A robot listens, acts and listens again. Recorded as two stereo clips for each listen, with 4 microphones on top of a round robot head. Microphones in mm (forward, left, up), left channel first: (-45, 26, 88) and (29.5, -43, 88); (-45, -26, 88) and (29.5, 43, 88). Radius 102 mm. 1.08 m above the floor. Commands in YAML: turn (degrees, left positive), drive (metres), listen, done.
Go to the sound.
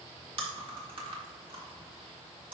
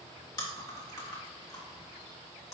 turn: -80
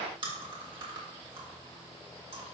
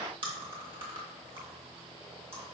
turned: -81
drive: 1.0
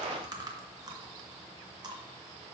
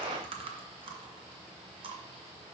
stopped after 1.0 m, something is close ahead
turn: 10
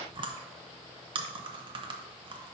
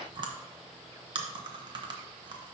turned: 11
done: "I am next to the chewing."